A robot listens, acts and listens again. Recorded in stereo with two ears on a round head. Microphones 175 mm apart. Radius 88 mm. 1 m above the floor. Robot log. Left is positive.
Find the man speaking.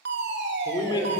note: The man speaking: about 25° left or 155° left.
cmd yaw +25
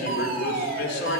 note: So it is at 120° left.
cmd yaw +120
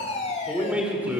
note: The man speaking is now 10° right.
cmd yaw -10
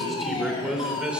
end: Found it: a man speaking, straight ahead, over 4 m away.